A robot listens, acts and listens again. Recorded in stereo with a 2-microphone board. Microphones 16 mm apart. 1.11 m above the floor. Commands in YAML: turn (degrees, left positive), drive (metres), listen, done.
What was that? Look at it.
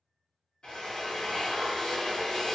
turn: 90
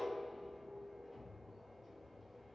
done: "Found it: a drill, straight ahead, under 1 m away."